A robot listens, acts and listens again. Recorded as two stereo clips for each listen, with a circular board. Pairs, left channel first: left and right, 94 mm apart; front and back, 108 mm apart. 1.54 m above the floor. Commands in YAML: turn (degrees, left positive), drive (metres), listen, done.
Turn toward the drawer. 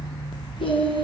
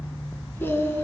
listen: true
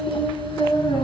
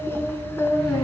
listen: true
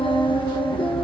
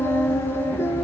done: "I can't make out a drawer, only singing."